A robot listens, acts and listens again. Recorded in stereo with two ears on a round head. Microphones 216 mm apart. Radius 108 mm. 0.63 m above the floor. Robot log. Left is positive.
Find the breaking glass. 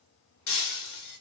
note: The breaking glass: about 75° left or 105° left.
cmd yaw +75
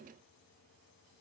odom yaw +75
cmd idle
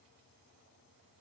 end: I heard breaking glass, but can't make it out now. It was about straight ahead or 30° left.